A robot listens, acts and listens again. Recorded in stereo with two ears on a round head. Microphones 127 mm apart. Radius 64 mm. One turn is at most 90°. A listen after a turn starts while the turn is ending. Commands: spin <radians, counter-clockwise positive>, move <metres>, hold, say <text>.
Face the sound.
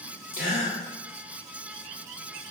spin 1.13
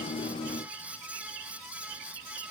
hold
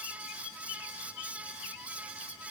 say I heard a gasp, but can't make it out now. It was about straight ahead or 50° left.